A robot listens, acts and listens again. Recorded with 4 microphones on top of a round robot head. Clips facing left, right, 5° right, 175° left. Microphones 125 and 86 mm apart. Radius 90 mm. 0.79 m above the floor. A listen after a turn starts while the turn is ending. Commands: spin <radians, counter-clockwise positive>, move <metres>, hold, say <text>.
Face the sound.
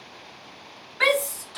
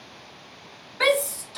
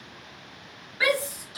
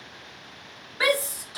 spin -2.44
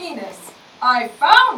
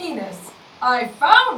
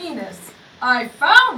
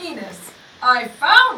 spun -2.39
say Found it: a shout, straight ahead, 1 to 2 m away.